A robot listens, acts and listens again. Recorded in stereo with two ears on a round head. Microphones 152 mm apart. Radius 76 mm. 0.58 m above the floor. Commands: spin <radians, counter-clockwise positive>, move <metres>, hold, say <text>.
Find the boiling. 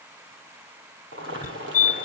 spin -1.57
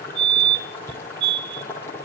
spin 0.26
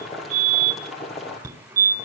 say Facing the boiling, over 4 m away.